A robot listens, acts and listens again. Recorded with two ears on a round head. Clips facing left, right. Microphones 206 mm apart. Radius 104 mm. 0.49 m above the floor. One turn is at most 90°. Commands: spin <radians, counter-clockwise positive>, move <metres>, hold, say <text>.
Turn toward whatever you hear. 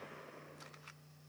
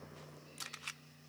hold
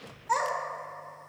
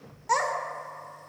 spin -0.96
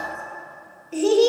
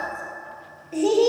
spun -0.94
spin 0.35
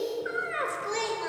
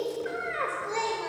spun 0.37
spin 0.35
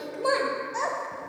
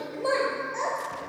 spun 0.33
spin 0.26
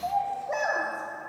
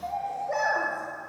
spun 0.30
say Found it: a child speaking, straight ahead.